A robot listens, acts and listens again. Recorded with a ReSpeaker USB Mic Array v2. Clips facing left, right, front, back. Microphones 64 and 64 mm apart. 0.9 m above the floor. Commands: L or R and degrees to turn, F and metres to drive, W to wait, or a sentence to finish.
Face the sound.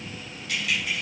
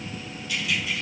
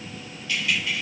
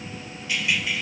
L105
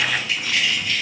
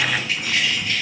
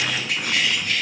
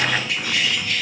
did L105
R35
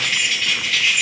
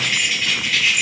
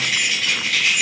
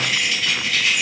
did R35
R10
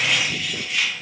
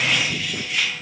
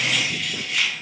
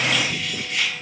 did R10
Found it: keys jangling, straight ahead.